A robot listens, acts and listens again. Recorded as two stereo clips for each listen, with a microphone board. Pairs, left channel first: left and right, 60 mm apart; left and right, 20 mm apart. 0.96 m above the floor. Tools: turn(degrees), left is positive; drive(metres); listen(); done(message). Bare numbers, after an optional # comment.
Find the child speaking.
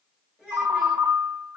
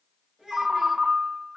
# The child speaking: about 35° right or 145° right.
turn(-35)
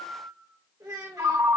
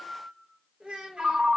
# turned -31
# So it is at 95° right.
turn(-95)
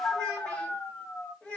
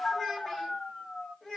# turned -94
# The child speaking is now 20° left.
turn(20)
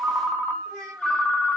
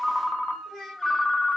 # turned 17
# The child speaking is now 10° left.
turn(10)
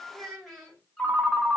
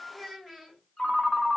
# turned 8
done("Found it: a child speaking, straight ahead.")